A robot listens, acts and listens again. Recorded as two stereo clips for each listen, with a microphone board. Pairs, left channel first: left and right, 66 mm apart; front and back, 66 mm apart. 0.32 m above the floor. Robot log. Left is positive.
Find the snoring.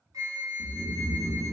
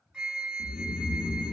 note: The snoring: 95° left.
cmd yaw +95
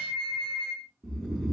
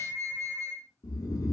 end: Facing the snoring, under 1 m away.